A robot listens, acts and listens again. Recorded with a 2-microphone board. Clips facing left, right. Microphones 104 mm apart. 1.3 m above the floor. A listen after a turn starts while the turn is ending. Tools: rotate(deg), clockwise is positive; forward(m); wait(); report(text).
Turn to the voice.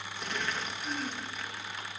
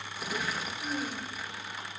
rotate(40)
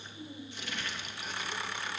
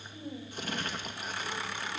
rotate(100)
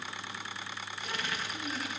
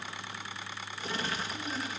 rotate(-10)
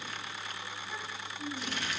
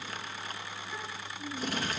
report("Found it: a child speaking, straight ahead.")